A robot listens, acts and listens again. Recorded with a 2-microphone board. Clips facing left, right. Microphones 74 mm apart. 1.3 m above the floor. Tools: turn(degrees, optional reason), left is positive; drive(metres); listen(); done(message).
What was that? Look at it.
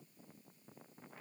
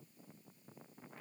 listen()
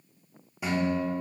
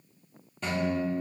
turn(degrees=30)
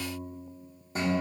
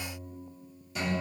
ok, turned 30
turn(degrees=135, reason="So it is at 135° left.")
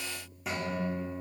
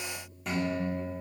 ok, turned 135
done("Found it: a guitar, straight ahead, 2 to 4 m away.")